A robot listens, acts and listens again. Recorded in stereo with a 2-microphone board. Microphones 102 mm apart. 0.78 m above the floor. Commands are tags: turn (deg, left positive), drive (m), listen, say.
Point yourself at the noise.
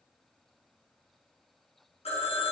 <turn deg="65"/>
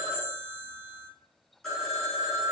<say>Facing the phone ringing.</say>